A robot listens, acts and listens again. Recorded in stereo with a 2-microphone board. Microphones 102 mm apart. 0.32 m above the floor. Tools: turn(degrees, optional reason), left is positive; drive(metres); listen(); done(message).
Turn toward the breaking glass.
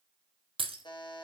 turn(degrees=-65, reason="The breaking glass: about 65° right or 115° right.")
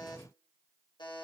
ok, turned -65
listen()
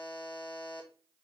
done("I heard breaking glass, but can't make it out now. It was about straight ahead or 50° right.")